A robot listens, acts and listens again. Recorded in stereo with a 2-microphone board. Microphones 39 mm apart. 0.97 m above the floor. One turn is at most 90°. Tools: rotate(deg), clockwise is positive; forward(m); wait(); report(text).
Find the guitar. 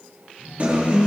rotate(45)
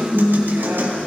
rotate(90)
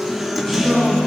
report("Facing the guitar.")